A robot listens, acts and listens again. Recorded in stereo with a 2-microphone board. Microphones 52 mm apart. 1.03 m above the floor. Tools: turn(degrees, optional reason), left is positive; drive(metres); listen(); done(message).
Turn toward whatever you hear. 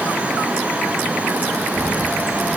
turn(degrees=40, reason="The child speaking: about 40° left or 140° left.")
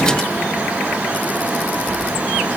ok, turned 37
turn(degrees=110, reason="So it is at 110° left.")
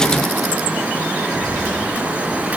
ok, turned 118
done("Found it: a child speaking, straight ahead, over 4 m away.")